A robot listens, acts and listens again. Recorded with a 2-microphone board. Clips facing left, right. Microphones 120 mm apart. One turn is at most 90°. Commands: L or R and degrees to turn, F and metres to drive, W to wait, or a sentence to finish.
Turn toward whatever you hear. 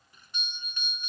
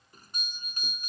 R40
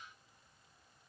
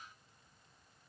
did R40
W
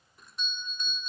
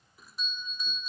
Found it: a doorbell, straight ahead.